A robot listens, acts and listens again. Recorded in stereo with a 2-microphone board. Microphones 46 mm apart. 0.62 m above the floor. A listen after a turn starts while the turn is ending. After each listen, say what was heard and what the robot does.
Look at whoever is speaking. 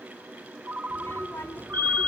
The child speaking: about 65° left or 115° left. Turn 65° left.
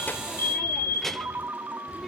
Found it: a child speaking, straight ahead, 1 to 2 m away.